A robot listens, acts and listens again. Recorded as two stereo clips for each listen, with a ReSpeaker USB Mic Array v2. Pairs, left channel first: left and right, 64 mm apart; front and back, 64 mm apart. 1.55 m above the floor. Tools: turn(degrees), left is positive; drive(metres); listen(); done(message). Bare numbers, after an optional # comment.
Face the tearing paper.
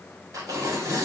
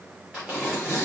# The tearing paper: 100° right.
turn(-100)
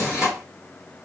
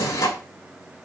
done("Facing the tearing paper.")